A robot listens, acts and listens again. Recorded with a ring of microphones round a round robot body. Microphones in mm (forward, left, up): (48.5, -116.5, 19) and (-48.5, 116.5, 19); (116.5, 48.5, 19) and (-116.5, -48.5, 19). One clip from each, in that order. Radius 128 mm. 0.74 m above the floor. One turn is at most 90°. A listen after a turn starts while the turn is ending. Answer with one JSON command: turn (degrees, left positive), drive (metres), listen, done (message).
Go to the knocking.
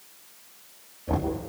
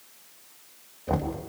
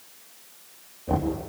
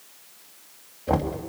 {"turn": 90}
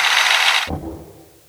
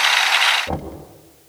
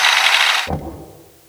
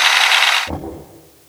{"turn": 85}
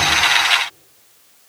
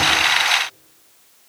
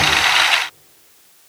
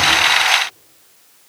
{"listen": true}
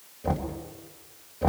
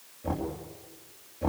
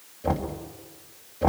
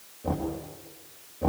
{"drive": 1.0}
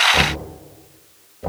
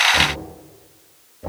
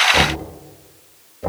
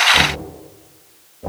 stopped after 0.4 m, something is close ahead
{"done": "Something is in my way. I am facing the knocking but have not reached it."}